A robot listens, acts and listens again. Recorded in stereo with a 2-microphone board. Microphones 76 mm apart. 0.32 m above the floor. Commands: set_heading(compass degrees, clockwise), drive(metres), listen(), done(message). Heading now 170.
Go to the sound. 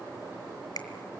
set_heading(110)
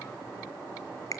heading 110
set_heading(55)
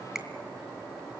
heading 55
set_heading(65)
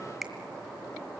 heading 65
drive(1.0)
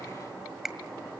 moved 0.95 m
set_heading(75)
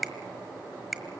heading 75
drive(1.0)
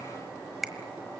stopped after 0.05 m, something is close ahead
done("I am next to the finger snap.")